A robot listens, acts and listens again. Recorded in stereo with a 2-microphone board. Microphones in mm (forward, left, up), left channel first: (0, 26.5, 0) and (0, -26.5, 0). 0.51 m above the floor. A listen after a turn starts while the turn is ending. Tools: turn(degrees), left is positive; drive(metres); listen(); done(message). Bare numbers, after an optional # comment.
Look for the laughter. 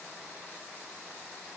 listen()
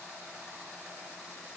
listen()
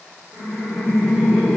# The laughter: about 20° right or 160° right.
turn(-20)
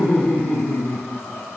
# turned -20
# So it is at 10° left.
turn(10)
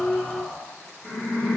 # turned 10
# The laughter is now 10° left.
turn(10)
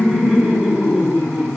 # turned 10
done("Facing the laughter.")